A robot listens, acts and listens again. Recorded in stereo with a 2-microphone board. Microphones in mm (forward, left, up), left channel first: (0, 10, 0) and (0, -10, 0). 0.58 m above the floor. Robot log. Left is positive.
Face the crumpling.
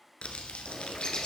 cmd yaw +90
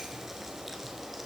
cmd idle
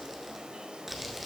note: The crumpling is now 10° right.
cmd yaw -10
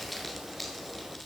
end: Found it: crumpling, straight ahead.